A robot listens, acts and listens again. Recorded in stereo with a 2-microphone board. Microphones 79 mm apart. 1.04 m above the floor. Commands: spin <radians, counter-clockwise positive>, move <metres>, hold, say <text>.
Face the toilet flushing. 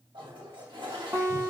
spin -1.57
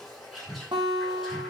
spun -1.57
say Facing the toilet flushing.